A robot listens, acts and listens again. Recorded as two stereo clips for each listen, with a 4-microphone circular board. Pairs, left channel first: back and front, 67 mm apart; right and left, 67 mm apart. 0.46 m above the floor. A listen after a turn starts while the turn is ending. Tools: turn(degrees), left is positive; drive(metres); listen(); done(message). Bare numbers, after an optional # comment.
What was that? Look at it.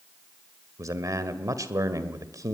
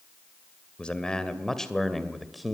done("Facing the man speaking.")